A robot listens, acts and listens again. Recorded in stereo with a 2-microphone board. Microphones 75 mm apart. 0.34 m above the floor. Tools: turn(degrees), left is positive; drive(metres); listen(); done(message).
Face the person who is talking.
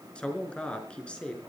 turn(degrees=30)
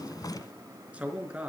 turn(degrees=-15)
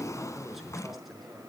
done("Found it: a man speaking, straight ahead, over 4 m away.")